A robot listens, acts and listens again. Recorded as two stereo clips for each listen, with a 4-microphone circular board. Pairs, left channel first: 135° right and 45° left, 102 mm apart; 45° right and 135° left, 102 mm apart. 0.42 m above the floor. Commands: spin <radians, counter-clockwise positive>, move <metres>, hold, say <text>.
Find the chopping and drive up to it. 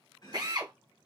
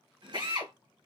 spin 3.05
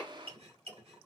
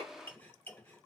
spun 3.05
spin 0.52
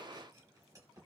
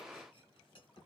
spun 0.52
spin -0.17
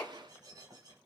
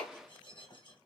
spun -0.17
move 1.0
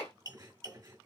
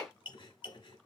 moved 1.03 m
move 1.0
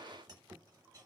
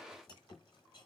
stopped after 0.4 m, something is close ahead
say I am next to the chopping.